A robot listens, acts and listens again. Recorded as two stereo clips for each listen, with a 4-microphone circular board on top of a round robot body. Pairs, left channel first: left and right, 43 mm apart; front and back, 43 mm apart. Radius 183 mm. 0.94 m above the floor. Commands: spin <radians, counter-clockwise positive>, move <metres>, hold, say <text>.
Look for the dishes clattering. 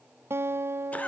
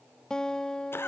hold
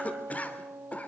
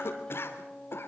hold
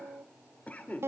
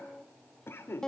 say I can't make out dishes clattering to turn to.